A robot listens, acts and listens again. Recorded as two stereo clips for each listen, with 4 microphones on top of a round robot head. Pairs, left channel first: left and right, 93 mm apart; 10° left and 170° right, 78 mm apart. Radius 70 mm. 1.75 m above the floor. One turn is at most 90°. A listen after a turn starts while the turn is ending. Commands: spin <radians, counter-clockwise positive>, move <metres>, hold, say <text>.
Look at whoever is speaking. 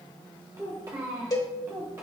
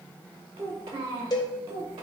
spin -1.57
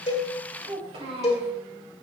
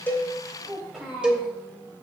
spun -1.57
spin -1.40
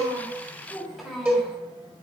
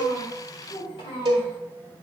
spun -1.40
say Facing the child speaking.